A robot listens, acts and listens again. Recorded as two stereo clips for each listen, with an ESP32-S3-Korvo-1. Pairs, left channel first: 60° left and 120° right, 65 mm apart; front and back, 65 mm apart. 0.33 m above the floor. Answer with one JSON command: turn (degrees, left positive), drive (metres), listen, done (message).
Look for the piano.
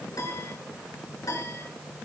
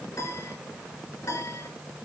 {"turn": 35}
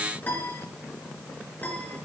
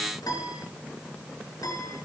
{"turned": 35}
{"done": "Found it: a piano, straight ahead, over 4 m away."}